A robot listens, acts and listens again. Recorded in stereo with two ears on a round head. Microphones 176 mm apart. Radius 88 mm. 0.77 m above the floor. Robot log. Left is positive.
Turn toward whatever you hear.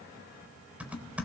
cmd yaw -30
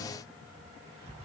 note: So it is at 145° right.
cmd yaw -145
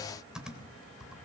end: Facing the typing on a keyboard.